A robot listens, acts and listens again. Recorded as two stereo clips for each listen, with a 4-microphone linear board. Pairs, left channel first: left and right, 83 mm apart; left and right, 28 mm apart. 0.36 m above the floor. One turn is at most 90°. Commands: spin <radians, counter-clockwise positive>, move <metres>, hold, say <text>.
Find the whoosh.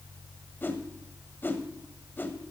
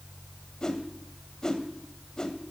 spin 0.44
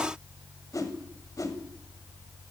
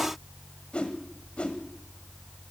spin 1.57
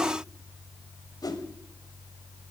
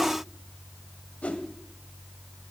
spin 1.22
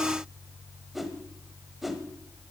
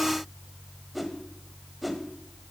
say Found it: a whoosh, straight ahead.